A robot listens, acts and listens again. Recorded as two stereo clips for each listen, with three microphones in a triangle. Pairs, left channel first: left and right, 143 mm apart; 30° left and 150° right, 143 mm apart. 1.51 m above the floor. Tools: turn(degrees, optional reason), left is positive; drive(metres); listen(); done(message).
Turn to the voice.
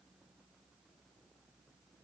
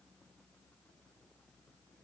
listen()
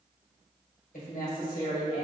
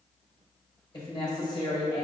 turn(degrees=85, reason="The woman speaking: 85° left.")
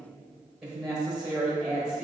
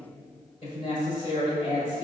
done("Facing the woman speaking.")